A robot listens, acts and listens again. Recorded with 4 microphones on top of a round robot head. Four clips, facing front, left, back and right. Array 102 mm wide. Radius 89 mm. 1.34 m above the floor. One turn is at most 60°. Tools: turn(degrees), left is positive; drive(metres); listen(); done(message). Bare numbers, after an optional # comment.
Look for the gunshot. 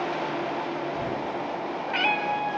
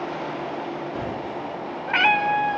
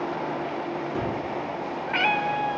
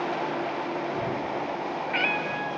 # The gunshot: straight behind.
turn(60)
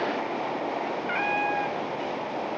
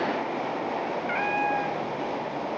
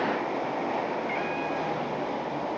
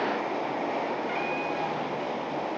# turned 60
# Nothing new. It was at 120° left.
turn(60)
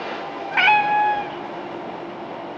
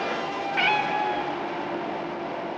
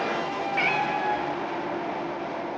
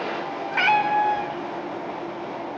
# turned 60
# Nothing new. It was at 60° left.
turn(60)
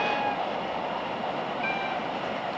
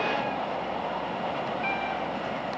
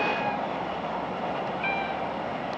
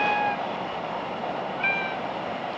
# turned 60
done("I heard a gunshot from this way, but can't make it out now.")